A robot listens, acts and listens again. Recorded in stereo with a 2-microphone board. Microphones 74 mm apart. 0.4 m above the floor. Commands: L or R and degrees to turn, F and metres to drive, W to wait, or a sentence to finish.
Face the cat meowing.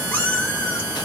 L25
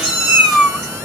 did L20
Facing the cat meowing.